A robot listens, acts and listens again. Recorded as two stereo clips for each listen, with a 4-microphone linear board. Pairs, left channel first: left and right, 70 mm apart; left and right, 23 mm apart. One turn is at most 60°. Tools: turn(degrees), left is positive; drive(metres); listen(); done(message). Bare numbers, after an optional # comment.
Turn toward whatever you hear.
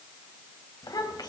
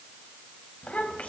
# The child speaking: about 70° left or 110° left.
turn(60)
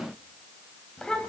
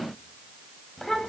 # So it is at 10° left.
turn(10)
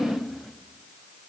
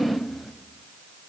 done("Facing the child speaking.")